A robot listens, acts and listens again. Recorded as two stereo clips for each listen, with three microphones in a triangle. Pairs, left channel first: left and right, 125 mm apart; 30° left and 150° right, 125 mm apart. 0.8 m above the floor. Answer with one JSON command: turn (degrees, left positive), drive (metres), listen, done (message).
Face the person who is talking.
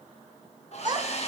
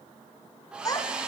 {"turn": -35}
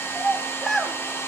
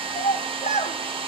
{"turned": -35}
{"done": "Found it: a child speaking, straight ahead, 1 to 2 m away."}